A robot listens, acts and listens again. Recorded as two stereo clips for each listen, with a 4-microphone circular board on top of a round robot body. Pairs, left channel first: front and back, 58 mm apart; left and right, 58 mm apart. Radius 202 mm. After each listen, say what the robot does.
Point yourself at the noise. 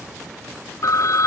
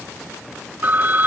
Turn 30° right.
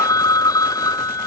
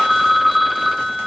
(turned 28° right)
Facing the phone ringing.